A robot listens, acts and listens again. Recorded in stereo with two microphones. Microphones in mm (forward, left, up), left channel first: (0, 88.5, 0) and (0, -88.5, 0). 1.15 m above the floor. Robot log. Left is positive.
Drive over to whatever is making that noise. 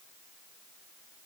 cmd idle
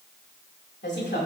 cmd yaw +90
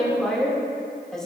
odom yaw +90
cmd fwd 1.0
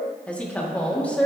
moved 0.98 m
note: The woman speaking is now 10° left.
cmd yaw +10
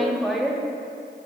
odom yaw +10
cmd fwd 1.0
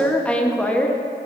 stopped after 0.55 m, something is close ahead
note: The woman speaking is now 10° left.
cmd yaw +10
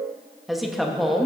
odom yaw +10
end: Arrived at the woman speaking, straight ahead.